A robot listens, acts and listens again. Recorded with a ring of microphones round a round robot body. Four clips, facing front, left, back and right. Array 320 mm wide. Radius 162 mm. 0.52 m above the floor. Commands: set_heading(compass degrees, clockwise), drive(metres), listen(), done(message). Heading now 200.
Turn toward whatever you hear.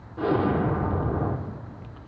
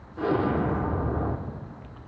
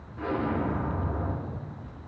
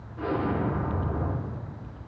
set_heading(165)
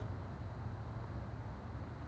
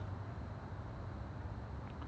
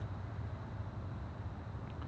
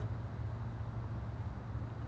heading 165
done("Facing where the explosion came from. I can't hear it now.")